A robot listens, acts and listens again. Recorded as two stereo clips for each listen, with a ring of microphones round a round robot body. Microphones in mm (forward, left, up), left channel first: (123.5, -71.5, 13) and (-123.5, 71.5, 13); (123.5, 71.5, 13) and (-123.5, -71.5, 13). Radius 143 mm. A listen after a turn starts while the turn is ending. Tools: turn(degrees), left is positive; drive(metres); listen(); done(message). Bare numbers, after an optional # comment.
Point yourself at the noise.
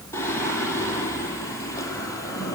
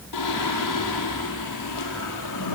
# The singing: 50° left.
turn(50)
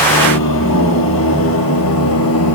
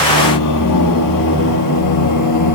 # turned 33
# The singing is now 10° left.
turn(10)
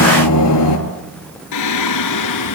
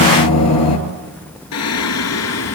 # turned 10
# The singing is now 10° right.
turn(-10)
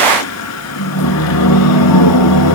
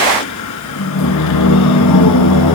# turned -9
done("Found it: singing, straight ahead.")